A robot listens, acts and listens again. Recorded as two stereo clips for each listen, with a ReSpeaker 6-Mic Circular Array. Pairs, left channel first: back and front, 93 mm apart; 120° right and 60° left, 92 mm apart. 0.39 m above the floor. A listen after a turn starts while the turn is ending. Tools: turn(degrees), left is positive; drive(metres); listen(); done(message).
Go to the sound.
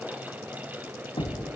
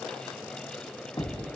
turn(degrees=-165)
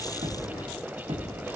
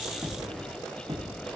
turn(degrees=20)
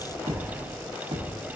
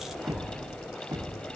turn(degrees=10)
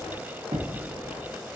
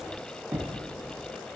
drive(metres=1.0)
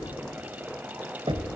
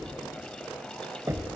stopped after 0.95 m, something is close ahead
turn(degrees=10)
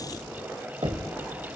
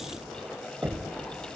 done("I am next to the knocking.")